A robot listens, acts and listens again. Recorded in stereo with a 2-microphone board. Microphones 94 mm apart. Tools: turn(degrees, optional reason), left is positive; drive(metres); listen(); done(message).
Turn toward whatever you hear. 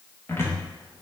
turn(degrees=25, reason="The cupboard door: about 25° left or 155° left.")
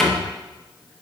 done("Found it: a cupboard door, straight ahead, under 1 m away.")